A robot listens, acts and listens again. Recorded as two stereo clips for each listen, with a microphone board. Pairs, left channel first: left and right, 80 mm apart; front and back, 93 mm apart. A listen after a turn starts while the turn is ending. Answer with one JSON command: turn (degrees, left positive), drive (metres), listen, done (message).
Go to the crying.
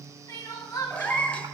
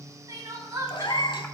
{"turn": 130}
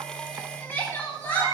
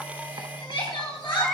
{"turn": 25}
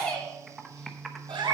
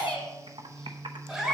{"turn": 15}
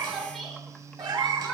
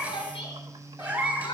{"drive": 1.0}
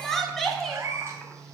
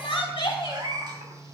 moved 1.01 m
{"drive": 1.0}
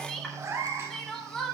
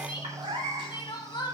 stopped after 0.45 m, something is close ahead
{"turn": 10}
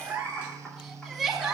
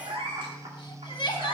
{"done": "Arrived at the crying, straight ahead."}